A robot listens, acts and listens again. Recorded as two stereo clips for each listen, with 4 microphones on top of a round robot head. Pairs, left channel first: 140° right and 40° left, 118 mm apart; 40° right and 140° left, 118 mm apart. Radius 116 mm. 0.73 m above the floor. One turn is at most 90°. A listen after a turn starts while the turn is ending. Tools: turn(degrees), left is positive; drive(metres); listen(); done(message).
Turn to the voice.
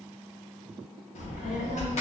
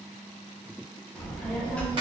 turn(degrees=-90)
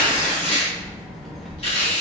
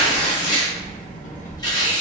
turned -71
turn(degrees=-50)
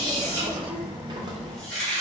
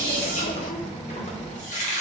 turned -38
turn(degrees=-10)
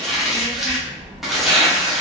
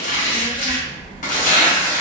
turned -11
done("Found it: a child speaking, straight ahead.")